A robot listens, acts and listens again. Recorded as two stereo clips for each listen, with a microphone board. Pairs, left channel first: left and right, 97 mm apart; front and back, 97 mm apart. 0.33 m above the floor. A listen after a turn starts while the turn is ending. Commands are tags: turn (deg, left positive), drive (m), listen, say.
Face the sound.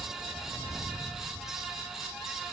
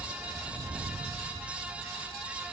<listen/>
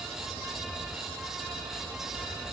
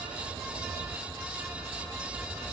<listen/>
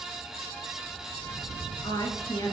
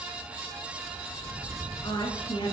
<turn deg="40"/>
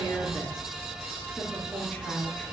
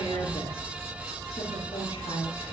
<turn deg="10"/>
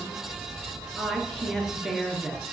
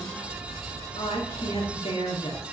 <say>Facing the woman speaking.</say>